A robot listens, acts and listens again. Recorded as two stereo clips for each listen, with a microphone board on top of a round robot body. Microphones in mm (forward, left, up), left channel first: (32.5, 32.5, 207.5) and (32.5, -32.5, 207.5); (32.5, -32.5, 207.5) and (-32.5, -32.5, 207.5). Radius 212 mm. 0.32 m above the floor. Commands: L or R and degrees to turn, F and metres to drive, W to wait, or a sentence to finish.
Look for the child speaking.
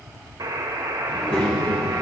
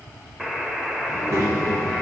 L145
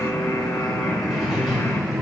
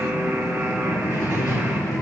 Found it: a child speaking, straight ahead.